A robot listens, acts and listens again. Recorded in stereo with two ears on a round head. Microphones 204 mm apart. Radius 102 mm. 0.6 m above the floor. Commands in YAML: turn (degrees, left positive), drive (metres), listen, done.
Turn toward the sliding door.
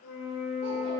listen: true
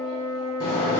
turn: 20
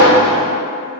done: "Found it: a sliding door, straight ahead, 1 to 2 m away."